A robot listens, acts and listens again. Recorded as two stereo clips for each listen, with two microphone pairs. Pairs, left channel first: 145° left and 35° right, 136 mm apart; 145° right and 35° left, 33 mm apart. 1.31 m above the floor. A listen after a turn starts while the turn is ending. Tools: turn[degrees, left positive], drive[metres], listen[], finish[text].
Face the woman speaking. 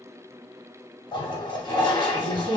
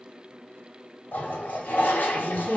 Thought: The woman speaking: 100° left.
Action: turn[100]
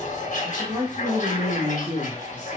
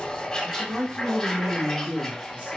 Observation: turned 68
Thought: The woman speaking is now 15° left.
Action: turn[15]
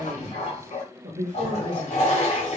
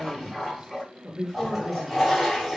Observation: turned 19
Thought: The woman speaking is now 30° right.
Action: turn[-30]
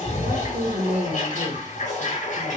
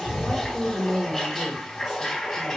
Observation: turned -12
Thought: The woman speaking is now 20° right.
Action: turn[-20]
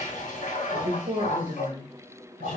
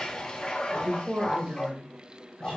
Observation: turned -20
Action: finish[Facing the woman speaking.]